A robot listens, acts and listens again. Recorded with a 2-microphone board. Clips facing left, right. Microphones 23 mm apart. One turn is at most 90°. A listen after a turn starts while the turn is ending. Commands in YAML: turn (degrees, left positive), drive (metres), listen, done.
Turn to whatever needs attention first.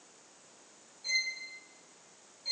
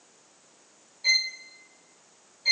listen: true
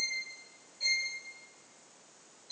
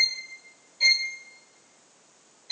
listen: true
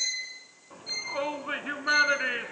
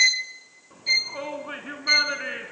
turn: 20
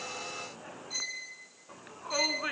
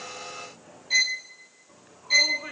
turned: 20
turn: 90
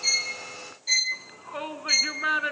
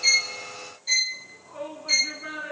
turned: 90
turn: 45
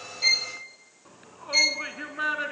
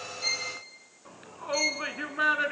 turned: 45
turn: -15
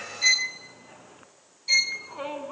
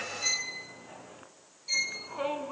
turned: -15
done: "Found it: a shout, straight ahead."